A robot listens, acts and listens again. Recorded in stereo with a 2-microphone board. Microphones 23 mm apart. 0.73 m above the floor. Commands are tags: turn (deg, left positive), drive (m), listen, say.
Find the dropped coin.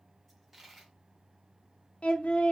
<turn deg="-30"/>
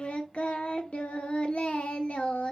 <listen/>
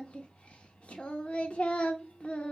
<say>I heard a dropped coin, but can't make it out now. It was about 25° left or 145° right.</say>